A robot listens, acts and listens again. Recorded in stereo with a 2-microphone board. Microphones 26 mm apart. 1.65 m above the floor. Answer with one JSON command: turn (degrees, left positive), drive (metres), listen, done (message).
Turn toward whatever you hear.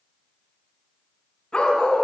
{"turn": 30}
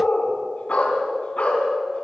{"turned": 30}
{"turn": 135}
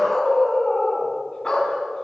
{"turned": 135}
{"turn": 35}
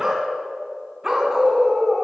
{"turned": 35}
{"turn": -15}
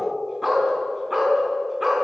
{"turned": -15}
{"done": "Found it: a dog barking, straight ahead."}